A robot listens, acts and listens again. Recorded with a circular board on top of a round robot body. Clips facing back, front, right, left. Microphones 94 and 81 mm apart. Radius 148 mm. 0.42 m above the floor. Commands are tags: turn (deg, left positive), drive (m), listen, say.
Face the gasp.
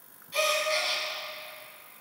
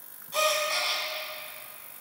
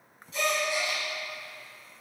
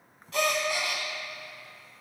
<turn deg="60"/>
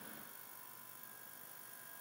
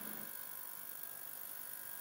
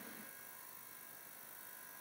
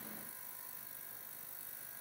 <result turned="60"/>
<say>Facing where the gasp came from. I can't hear it now.</say>